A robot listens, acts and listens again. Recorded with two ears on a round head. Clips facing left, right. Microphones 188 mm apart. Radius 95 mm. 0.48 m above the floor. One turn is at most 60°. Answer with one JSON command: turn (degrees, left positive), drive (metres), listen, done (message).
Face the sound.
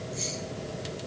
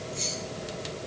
{"turn": 30}
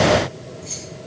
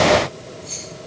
{"turn": 60}
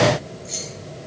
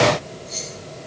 {"turn": 60}
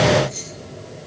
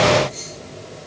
{"turn": 55}
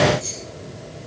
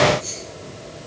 {"turn": 35}
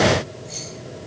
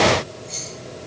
{"done": "Found it: keys jangling, straight ahead, over 4 m away."}